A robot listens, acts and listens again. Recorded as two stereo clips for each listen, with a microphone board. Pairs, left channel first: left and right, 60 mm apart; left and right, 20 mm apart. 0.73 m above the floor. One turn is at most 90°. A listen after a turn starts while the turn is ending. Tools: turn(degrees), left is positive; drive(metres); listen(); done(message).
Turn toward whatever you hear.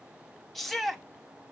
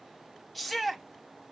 turn(degrees=30)
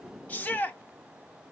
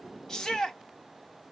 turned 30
turn(degrees=90)
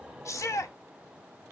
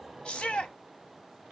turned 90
turn(degrees=85)
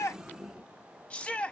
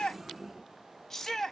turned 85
turn(degrees=25)
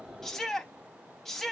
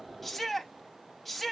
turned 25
turn(degrees=10)
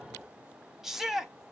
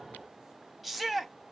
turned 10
done("Facing the shout.")